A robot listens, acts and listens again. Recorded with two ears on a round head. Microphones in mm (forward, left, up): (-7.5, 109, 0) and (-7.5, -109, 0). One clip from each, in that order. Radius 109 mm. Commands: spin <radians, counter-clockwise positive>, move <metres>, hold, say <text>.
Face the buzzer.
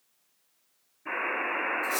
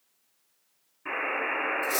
spin -0.87
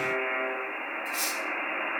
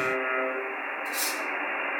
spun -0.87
spin -1.31
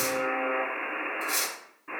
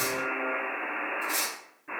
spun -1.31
spin 0.35
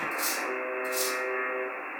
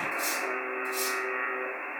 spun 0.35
say Facing the buzzer, 1 to 2 m away.